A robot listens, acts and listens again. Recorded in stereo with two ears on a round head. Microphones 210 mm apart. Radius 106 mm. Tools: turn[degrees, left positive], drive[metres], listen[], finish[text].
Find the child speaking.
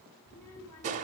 Action: turn[90]
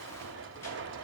Action: listen[]
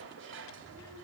Thought: The child speaking is now 15° left.
Action: turn[15]
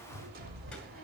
Action: listen[]
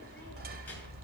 Action: listen[]
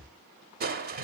Action: finish[Facing where the child speaking came from. I can't hear it now.]